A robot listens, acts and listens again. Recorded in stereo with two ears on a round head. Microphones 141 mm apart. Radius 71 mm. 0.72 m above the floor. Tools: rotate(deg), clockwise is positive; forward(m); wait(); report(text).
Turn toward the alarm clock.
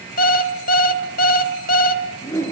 rotate(-60)
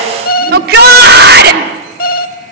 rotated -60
rotate(-60)
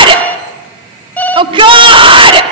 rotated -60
rotate(-10)
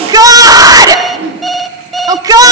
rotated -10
report("Found it: an alarm clock, straight ahead, 1 to 2 m away.")